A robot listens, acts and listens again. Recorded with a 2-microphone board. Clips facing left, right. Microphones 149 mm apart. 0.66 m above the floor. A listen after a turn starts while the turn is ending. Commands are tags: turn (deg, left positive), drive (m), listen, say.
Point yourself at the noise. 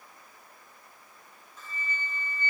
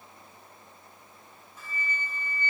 <turn deg="-30"/>
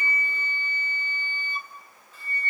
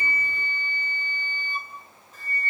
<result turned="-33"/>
<turn deg="-135"/>
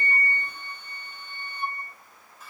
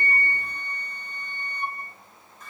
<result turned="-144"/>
<say>Facing the flute, over 4 m away.</say>